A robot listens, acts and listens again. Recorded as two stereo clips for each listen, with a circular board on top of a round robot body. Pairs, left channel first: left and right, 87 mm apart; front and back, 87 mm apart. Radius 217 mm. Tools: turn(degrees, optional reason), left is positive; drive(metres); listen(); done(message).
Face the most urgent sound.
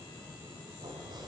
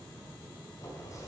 listen()
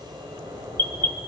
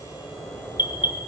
turn(degrees=25, reason="The alarm: 25° left.")
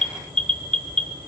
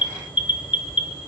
turn(degrees=10, reason="The alarm is now 10° left.")
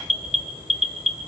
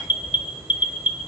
done("Facing the alarm, 1 to 2 m away.")